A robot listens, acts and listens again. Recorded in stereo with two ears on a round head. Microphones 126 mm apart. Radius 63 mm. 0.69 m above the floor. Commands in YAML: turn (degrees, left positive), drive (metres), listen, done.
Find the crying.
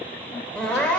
turn: 30
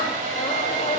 listen: true
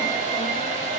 listen: true
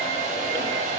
done: "I heard crying, but can't make it out now. It was about 20° right or 140° left."